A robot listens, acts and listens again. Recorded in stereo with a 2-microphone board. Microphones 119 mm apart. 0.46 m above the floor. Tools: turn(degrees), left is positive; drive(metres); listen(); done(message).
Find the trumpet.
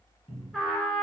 turn(degrees=30)
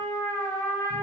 turn(degrees=145)
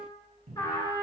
turn(degrees=35)
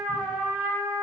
done("Found it: a trumpet, straight ahead, under 1 m away.")